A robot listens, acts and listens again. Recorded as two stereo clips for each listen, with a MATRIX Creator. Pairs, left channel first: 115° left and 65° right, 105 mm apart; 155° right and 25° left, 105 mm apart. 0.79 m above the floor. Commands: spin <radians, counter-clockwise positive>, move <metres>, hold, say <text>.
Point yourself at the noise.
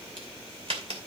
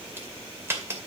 spin -0.79
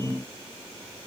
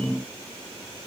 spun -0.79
say Facing where the crack came from. I can't hear it now.